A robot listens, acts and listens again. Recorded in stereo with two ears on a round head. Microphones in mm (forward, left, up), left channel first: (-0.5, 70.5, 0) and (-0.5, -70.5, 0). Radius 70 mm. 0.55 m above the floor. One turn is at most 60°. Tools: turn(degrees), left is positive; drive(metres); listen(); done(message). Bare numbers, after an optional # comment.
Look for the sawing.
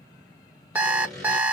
turn(30)
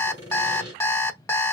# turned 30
# So it is at 30° right.
turn(-30)
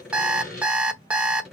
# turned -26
done("Found it: sawing, straight ahead, 2 to 4 m away.")